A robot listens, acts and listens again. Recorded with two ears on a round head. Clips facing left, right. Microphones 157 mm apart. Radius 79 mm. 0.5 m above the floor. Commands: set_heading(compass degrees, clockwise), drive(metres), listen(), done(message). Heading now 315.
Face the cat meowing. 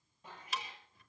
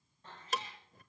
set_heading(285)
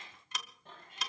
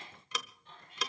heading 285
set_heading(150)
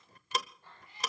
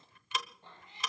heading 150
set_heading(170)
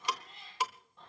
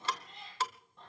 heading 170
done("Facing the cat meowing, over 4 m away.")